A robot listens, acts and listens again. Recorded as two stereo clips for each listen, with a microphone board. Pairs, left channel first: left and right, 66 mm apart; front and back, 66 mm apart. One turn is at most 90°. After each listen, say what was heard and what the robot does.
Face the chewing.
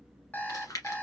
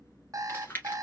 The chewing: 55° left. Turn 55° left.
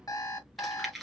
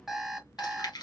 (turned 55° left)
Found it: chewing, straight ahead, 1 to 2 m away.